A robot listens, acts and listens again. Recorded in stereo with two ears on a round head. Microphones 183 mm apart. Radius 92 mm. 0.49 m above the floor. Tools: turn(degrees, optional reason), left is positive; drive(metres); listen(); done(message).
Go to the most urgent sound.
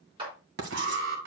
turn(degrees=-70, reason="The alarm: about 70° right or 110° right.")
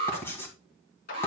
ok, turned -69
turn(degrees=-30, reason="So it is at 30° right.")
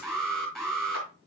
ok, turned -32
drive(metres=1.0)
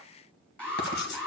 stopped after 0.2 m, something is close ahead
done("Blocked. The alarm is further on, straight ahead.")